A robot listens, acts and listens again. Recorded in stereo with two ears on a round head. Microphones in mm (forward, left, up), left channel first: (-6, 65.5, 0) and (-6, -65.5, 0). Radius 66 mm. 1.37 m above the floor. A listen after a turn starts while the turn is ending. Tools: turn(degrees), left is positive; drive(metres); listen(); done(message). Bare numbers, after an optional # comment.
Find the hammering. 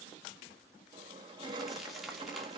listen()
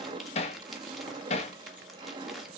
# The hammering: about 45° left or 135° left.
turn(45)
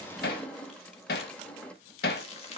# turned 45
# So it is at 85° left.
turn(85)
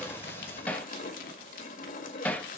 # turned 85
# The hammering is now 10° left.
turn(10)
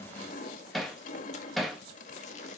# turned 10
done("Found it: hammering, straight ahead, 1 to 2 m away.")